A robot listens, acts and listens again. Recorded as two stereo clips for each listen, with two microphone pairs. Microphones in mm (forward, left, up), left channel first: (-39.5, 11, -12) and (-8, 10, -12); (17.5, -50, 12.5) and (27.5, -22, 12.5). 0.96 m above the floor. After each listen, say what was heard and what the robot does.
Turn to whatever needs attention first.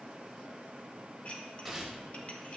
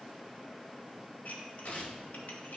Keep listening.
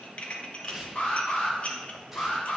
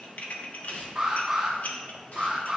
The alarm: 140° left. Turn 140° left.
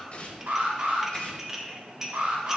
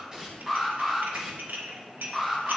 Facing the alarm, 1 to 2 m away.